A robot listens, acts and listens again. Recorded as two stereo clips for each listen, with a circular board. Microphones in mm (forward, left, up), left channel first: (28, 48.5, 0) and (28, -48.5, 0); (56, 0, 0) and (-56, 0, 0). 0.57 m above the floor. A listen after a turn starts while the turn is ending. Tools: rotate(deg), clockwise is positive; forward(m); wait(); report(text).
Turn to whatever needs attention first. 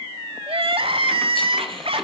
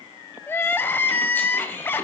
rotate(70)
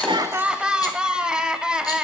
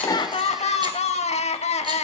rotate(10)
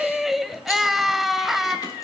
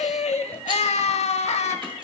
report("Facing the crying.")